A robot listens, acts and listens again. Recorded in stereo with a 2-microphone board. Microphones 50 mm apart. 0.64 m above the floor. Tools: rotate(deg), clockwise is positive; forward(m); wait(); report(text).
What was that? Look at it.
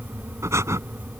rotate(90)
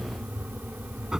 rotate(15)
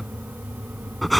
report("Facing the breathing.")